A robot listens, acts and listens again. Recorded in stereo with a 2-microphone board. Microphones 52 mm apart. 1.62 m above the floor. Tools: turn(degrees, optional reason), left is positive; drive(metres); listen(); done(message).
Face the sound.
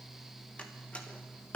turn(degrees=25, reason="The door slam: about 25° left or 155° left.")
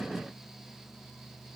listen()
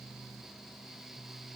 done("I heard a door slam, but can't make it out now. It was about straight ahead or 130° left.")